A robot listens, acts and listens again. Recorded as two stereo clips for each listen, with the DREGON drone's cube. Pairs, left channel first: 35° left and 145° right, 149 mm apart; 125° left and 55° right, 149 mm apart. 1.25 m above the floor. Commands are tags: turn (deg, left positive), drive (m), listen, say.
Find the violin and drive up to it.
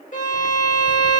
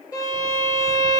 <turn deg="60"/>
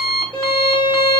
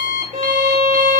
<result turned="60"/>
<turn deg="-20"/>
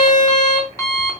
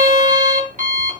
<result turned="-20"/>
<drive m="1.0"/>
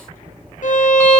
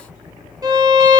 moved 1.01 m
<drive m="1.0"/>
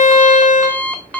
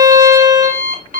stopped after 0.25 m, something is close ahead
<say>I am next to the violin.</say>